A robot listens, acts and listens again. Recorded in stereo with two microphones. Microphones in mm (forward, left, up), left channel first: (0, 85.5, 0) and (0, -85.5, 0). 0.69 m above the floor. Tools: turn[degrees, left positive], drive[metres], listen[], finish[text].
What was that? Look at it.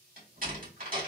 Thought: The door slam: about 55° right or 125° right.
Action: turn[-55]
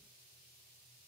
Action: listen[]
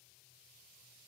Action: finish[I heard a door slam, but can't make it out now. It was about straight ahead or 70° right.]